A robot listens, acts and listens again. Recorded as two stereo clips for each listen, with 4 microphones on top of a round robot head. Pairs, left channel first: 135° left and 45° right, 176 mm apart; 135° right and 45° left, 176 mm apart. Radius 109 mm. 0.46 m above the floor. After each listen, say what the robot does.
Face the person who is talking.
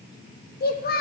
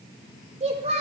Turn 100° left.
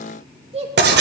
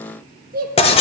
Turn 10° left.
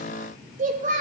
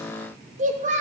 Facing the child speaking, under 1 m away.